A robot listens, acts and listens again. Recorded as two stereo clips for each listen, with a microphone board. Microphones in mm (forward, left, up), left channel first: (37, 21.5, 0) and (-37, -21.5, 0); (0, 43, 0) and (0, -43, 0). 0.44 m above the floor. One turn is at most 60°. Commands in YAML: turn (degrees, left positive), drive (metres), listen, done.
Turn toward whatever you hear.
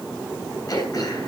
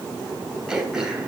turn: -10
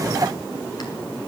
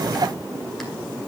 listen: true
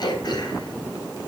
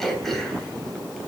done: "Facing the throat clearing."